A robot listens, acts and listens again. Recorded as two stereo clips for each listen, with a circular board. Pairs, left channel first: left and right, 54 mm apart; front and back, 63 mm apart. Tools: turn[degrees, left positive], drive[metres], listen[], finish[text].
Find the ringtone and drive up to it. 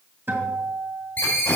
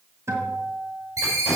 Thought: The ringtone: 150° left.
Action: turn[150]
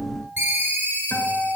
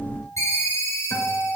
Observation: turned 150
Thought: The ringtone is now 40° right.
Action: turn[-40]
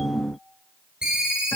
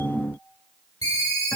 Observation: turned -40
Thought: The ringtone is now 15° right.
Action: turn[-15]
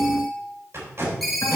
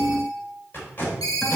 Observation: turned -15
Action: drive[1.0]
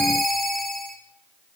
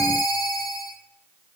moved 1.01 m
Action: drive[1.0]
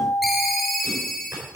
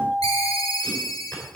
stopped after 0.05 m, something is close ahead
Action: finish[Arrived at the ringtone, straight ahead.]